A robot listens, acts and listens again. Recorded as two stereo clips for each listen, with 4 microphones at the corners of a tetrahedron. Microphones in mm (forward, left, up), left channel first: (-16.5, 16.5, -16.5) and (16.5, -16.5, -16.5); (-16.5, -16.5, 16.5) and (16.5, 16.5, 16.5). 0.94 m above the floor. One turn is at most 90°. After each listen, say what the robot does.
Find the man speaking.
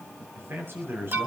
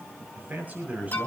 Turn 10° right.
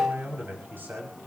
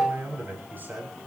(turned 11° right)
Facing the man speaking.